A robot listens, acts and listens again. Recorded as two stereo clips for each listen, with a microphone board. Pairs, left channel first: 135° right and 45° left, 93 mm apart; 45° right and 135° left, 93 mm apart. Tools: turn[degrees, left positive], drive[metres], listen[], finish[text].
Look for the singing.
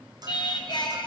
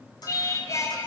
Thought: The singing: 100° right.
Action: turn[-100]
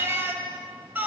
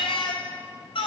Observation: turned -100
Thought: The singing is now 25° right.
Action: turn[-25]
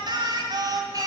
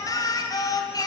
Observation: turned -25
Action: finish[Facing the singing, 2 to 4 m away.]